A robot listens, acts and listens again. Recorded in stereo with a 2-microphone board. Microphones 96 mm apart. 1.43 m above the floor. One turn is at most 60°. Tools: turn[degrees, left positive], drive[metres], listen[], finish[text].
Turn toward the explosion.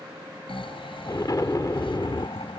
Thought: The explosion: about 40° left or 140° left.
Action: turn[40]
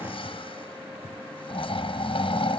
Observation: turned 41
Action: listen[]
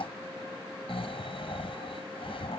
Action: finish[I heard an explosion, but can't make it out now. It was about straight ahead or 100° left.]